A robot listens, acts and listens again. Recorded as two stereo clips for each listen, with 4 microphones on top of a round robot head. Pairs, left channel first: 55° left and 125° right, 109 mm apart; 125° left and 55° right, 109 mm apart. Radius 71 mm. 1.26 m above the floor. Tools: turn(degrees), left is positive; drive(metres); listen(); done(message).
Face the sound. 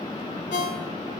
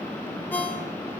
turn(degrees=50)
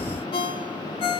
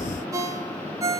turn(degrees=10)
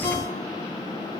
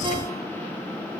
listen()
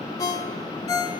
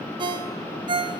done("Found it: a ringtone, straight ahead, 2 to 4 m away.")